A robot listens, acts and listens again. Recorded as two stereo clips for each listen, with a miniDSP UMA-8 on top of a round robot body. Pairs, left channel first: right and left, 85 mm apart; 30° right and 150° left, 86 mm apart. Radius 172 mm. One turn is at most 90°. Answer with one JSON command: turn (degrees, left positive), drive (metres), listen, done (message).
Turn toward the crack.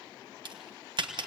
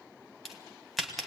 {"turn": 60}
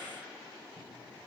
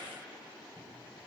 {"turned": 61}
{"done": "Facing where the crack came from. I can't hear it now."}